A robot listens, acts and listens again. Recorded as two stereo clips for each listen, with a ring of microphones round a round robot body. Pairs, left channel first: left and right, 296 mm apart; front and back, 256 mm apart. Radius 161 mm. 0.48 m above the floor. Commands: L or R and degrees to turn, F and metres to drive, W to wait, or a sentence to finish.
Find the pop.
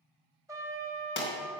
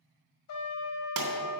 L145
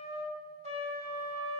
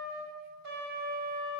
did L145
I heard a pop from this way, but can't make it out now.